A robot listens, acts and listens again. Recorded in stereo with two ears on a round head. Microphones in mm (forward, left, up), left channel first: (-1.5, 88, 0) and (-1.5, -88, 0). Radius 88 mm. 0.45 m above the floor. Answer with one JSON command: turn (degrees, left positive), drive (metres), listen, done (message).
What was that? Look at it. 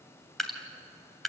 {"turn": 30}
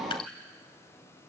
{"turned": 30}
{"turn": 150}
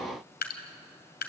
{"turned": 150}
{"turn": 55}
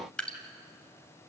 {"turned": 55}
{"done": "Facing the dripping, 2 to 4 m away."}